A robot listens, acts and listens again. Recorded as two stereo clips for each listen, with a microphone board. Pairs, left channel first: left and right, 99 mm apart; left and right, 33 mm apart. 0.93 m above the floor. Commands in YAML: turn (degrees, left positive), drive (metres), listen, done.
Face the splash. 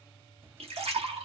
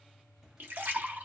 turn: -90
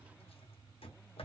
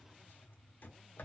done: "Facing where the splash came from. I can't hear it now."